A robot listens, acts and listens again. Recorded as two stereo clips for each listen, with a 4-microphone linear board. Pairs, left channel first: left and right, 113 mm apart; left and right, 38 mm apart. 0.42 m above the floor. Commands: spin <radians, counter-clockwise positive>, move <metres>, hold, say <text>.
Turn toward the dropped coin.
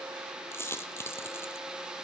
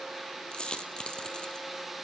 spin 0.44
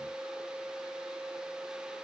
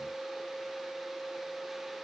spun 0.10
hold
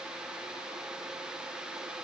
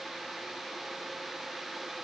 say I heard a dropped coin, but can't make it out now. It was about 20° left or 150° left.